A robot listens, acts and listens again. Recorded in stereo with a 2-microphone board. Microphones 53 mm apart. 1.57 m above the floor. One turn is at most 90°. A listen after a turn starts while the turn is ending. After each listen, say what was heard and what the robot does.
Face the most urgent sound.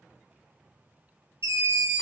The scream: about 70° right or 110° right. Turn 70° right.
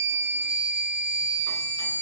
So it is at 35° right. Turn 35° right.
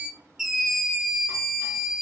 Facing the scream.